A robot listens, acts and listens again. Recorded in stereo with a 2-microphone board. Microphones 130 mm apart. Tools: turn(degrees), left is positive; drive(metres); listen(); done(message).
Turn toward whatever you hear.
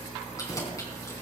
turn(degrees=25)
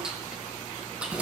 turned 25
turn(degrees=-10)
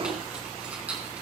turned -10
turn(degrees=-10)
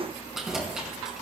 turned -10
done("Facing the keys jangling.")